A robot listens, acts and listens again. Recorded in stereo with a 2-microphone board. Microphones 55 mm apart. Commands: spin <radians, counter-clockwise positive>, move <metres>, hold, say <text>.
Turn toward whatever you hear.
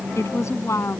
spin 1.05
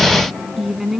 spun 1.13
say Facing the woman speaking.